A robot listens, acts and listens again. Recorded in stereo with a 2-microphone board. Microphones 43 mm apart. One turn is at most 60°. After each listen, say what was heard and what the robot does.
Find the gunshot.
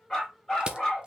Keep listening.
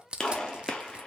The gunshot: about 20° left or 160° left. Turn 20° left.
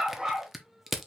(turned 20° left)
Keep listening.
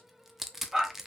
I heard a gunshot, but can't make it out now. It was about straight ahead or 140° left.